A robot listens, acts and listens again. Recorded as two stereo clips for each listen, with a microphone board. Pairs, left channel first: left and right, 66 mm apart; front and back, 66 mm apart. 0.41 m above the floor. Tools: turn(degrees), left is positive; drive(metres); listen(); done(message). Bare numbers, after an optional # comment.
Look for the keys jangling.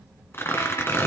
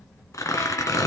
listen()
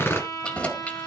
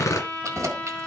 # The keys jangling: 155° left.
turn(155)
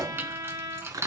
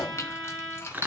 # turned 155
# The keys jangling is now 45° right.
turn(-45)
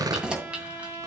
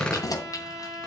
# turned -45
# The keys jangling is now 15° right.
turn(-15)
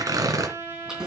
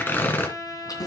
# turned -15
# The keys jangling is now 10° right.
turn(-10)
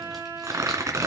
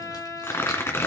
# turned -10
listen()
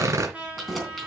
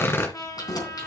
done("Found it: keys jangling, straight ahead, 2 to 4 m away.")